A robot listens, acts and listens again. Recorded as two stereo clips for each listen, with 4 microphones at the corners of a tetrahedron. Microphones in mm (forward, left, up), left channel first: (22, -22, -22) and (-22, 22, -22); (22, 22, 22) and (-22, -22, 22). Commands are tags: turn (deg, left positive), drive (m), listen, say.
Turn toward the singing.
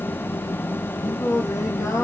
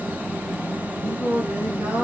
<turn deg="-70"/>
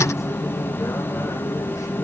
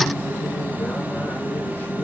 <listen/>
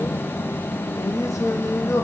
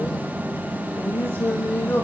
<turn deg="-15"/>
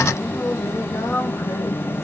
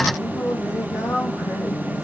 <say>Found it: singing, straight ahead.</say>